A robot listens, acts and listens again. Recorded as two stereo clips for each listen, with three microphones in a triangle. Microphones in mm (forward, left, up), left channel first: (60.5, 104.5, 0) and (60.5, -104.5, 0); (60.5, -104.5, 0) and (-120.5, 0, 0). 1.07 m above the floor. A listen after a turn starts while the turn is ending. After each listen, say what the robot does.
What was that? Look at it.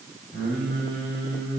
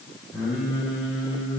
Turn 70° left.
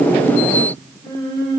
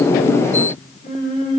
Turn 25° left.
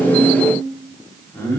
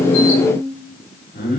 Turn 10° left.
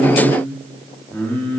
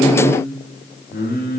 Turn 10° left.
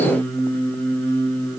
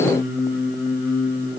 Turn 10° left.
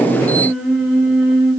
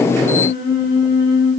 Found it: singing, straight ahead.